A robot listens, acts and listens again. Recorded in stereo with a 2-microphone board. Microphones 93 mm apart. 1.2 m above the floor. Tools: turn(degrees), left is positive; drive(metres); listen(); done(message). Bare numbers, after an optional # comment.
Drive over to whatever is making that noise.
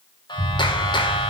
# The clap: about 55° left or 125° left.
turn(55)
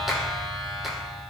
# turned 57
drive(1.0)
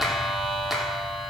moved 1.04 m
drive(1.0)
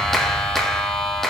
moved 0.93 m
drive(1.0)
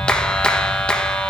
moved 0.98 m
# The clap is now 10° left.
turn(10)
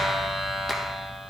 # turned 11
drive(1.0)
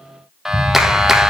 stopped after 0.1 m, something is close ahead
done("Arrived at the clap, straight ahead.")